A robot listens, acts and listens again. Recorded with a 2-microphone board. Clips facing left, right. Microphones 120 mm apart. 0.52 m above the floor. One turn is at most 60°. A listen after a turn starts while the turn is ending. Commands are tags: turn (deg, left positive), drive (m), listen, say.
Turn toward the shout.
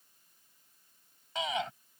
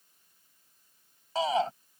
<turn deg="-35"/>
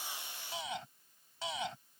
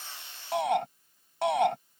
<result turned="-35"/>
<turn deg="-60"/>
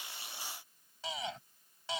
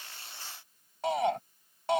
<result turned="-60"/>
<turn deg="-60"/>
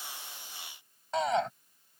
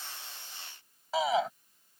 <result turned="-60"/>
<say>Facing the shout.</say>